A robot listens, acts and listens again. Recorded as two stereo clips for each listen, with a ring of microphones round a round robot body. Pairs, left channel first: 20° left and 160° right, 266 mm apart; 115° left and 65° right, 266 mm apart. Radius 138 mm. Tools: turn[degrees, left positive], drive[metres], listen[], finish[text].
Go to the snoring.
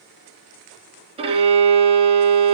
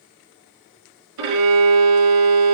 Action: listen[]
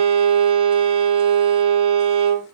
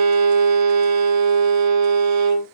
Action: listen[]
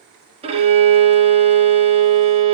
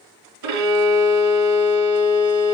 Action: finish[I can't make out snoring, only a violin.]